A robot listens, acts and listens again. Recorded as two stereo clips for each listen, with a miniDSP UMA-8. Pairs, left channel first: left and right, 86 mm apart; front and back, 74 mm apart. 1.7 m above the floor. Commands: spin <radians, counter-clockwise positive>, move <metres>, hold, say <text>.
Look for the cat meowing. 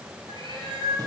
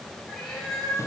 spin -1.40
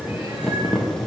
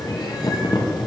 hold
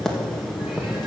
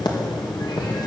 hold
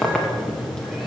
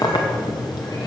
say I heard a cat meowing from this way, but can't make it out now.